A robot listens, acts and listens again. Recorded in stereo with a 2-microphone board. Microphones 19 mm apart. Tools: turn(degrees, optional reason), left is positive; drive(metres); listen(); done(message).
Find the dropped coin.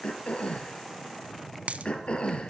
turn(degrees=-90)
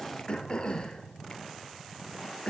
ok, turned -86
done("Facing where the dropped coin came from. I can't hear it now.")